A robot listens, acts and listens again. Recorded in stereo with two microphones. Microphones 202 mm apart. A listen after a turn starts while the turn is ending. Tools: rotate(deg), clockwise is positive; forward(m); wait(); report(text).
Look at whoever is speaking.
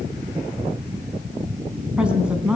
rotate(30)
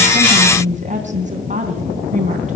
rotate(140)
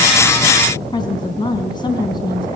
rotate(-20)
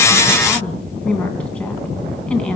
report("Found it: a woman speaking, straight ahead, 2 to 4 m away.")